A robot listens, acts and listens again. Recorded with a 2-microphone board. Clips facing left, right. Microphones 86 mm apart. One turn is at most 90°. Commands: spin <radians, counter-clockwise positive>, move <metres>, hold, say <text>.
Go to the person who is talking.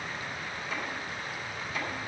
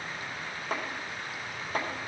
hold
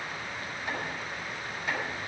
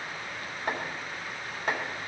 hold
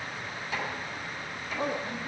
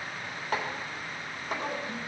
spin 0.96
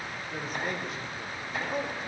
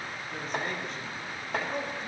move 1.0
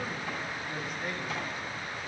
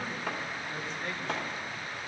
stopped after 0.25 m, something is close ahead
hold
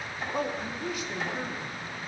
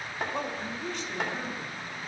say Blocked. The man speaking is further on, straight ahead.